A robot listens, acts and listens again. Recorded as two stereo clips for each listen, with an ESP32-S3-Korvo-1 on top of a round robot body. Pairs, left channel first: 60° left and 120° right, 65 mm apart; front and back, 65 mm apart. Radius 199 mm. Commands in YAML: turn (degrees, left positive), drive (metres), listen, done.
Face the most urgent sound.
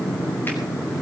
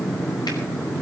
listen: true
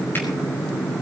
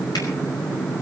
listen: true
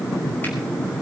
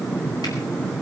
done: "I can't make out anything urgent to turn to."